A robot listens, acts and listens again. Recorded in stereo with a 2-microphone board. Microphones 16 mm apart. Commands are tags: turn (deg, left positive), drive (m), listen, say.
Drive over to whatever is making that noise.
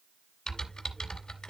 <turn deg="75"/>
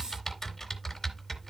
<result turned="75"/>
<turn deg="30"/>
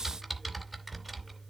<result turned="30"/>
<drive m="1.0"/>
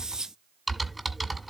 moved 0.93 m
<drive m="1.0"/>
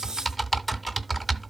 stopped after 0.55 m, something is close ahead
<say>Arrived at the typing on a keyboard, straight ahead.</say>